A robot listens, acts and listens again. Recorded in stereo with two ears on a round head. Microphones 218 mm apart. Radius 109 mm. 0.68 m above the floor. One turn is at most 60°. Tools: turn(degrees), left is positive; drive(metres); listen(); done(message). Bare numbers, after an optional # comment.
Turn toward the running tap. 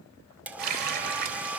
# The running tap: about 40° right or 140° right.
turn(-40)
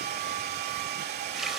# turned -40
listen()
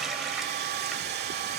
listen()
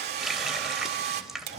done("Found it: a running tap, straight ahead, 2 to 4 m away.")